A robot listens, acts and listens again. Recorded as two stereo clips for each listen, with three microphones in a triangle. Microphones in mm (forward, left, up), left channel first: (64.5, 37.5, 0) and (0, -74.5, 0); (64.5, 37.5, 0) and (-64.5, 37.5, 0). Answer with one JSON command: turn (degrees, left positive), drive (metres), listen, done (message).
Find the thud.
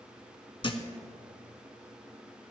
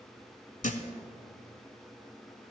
{"turn": 10}
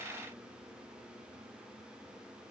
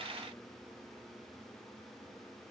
{"done": "I heard a thud from this way, but can't make it out now."}